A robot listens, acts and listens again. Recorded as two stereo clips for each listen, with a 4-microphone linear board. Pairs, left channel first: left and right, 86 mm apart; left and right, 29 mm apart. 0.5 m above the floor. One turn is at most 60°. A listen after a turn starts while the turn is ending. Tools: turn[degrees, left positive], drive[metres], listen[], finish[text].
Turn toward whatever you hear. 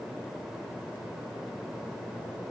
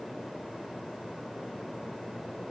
Action: listen[]
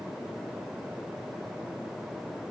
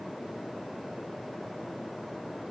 Action: listen[]
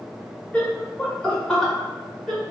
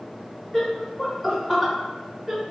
Action: turn[30]
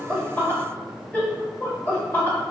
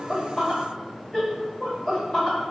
Thought: So it is at 155° left.
Action: turn[60]
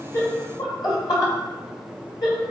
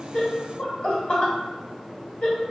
Thought: The laughter is now 125° left.
Action: turn[60]
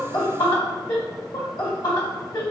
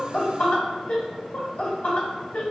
Thought: The laughter is now 65° left.
Action: turn[60]
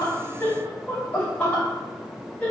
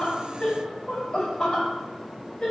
Thought: The laughter is now 20° left.
Action: turn[20]
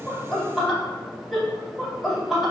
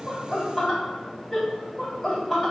Action: finish[Found it: laughter, straight ahead, 1 to 2 m away.]